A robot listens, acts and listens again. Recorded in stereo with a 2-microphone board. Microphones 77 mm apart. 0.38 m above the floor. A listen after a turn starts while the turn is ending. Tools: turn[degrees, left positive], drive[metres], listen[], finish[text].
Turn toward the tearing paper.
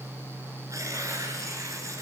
Thought: The tearing paper: about 45° right or 135° right.
Action: turn[-45]
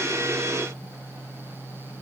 Action: listen[]
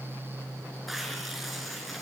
Action: finish[Found it: tearing paper, straight ahead, over 4 m away.]